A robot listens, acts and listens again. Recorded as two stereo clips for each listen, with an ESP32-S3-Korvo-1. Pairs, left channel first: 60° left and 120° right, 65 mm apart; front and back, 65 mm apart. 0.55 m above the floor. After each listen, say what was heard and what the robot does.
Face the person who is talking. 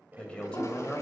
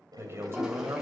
The man speaking: 130° left. Turn 130° left.
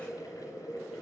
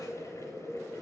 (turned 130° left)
Keep listening.
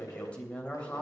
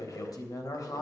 The man speaking is now 10° right. Turn 10° right.
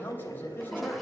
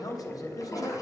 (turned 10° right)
Found it: a man speaking, straight ahead, 2 to 4 m away.